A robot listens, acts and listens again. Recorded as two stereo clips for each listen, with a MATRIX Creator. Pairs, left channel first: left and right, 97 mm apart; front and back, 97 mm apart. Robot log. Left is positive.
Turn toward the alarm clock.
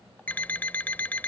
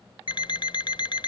note: The alarm clock: 20° left.
cmd yaw +20
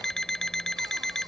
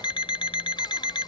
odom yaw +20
end: Facing the alarm clock.